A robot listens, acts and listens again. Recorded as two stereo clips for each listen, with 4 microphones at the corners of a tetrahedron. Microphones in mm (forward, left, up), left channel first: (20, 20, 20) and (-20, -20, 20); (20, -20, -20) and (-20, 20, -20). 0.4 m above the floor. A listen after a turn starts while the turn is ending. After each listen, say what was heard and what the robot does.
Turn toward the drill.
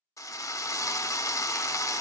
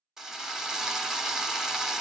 The drill: 55° left. Turn 55° left.
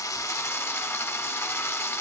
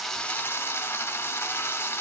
Found it: a drill, straight ahead, under 1 m away.